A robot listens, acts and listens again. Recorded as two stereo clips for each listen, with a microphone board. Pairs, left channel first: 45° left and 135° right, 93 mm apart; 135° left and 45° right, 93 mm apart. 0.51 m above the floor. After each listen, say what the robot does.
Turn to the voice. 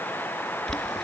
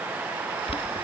Keep listening.
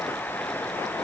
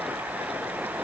Keep listening.
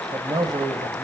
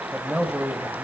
Turn 130° right.
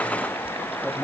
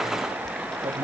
Keep listening.
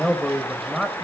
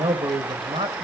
Turn 40° right.
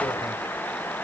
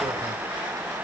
Keep listening.
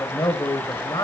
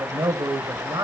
Facing the man speaking, 2 to 4 m away.